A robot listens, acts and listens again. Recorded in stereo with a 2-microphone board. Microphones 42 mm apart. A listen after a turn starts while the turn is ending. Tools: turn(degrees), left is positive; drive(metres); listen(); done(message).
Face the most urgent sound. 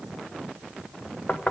listen()
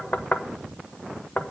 listen()
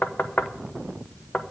done("I can't make out anything urgent, only knocking.")